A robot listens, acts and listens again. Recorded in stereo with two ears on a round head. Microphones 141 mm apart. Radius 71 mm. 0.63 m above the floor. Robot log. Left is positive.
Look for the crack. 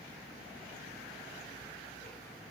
cmd idle
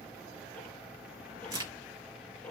note: The crack: about 25° right or 155° right.
cmd yaw -25
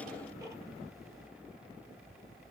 cmd idle
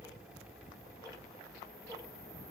end: I heard a crack, but can't make it out now. It was about straight ahead or 130° right.